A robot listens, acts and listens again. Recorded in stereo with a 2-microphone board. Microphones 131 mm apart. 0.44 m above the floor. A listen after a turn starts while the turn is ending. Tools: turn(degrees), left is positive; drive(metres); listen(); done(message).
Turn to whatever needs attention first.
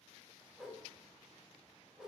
listen()
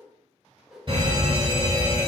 turn(degrees=-40)
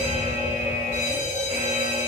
turn(degrees=-90)
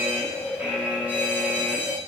turn(degrees=-15)
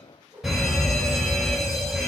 done("Facing the fire alarm, 2 to 4 m away.")